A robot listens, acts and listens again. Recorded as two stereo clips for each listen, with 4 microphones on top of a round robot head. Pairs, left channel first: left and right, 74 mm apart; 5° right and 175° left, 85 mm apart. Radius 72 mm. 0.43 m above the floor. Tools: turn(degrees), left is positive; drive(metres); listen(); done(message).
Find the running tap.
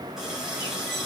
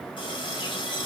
done("Found it: a running tap, straight ahead.")